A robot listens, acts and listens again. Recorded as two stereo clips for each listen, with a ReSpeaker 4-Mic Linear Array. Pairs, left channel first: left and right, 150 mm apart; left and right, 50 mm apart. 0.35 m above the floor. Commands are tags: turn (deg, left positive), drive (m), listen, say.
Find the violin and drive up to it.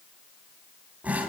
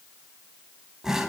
<listen/>
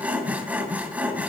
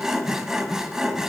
<listen/>
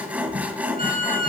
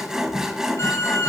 <turn deg="70"/>
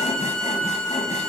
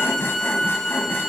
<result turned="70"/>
<drive m="1.0"/>
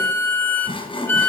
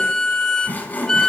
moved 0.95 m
<turn deg="15"/>
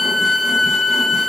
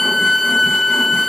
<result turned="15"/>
<drive m="1.0"/>
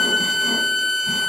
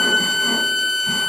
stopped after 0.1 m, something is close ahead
<say>I am next to the violin.</say>